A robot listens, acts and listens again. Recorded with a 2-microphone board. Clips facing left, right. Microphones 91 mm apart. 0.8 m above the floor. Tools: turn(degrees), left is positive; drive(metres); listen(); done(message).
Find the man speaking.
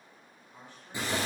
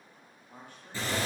turn(degrees=-60)
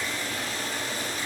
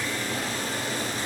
listen()
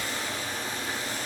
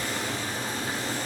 listen()
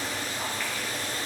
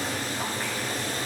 done("I heard a man speaking, but can't make it out now. It was about straight ahead or 60° right.")